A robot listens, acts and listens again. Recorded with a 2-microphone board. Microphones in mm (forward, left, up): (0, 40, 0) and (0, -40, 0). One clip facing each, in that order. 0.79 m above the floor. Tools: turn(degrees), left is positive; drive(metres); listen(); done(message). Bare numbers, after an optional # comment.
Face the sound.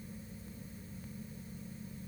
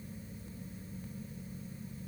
listen()
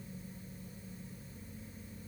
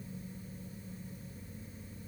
listen()
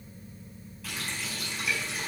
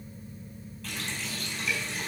turn(30)
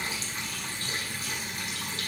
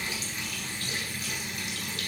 # So it is at 150° left.
turn(150)
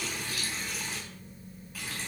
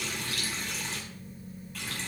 done("Found it: a running tap, straight ahead.")